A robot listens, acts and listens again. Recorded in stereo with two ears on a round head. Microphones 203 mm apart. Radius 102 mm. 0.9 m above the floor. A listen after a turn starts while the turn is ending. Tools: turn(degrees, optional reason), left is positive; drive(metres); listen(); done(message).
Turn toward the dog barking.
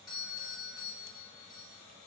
listen()
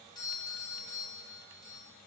listen()
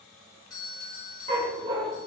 turn(degrees=-25, reason="The dog barking: about 25° right or 155° right.")
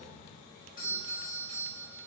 listen()
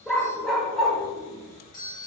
done("Found it: a dog barking, straight ahead, 1 to 2 m away.")